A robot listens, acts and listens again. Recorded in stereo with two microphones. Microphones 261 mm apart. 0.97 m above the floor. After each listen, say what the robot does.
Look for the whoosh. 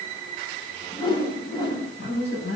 Turn 20° left.
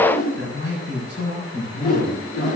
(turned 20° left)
Turn 140° left.
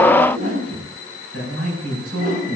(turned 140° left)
Turn 35° right.
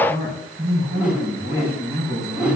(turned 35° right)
Found it: a whoosh, straight ahead.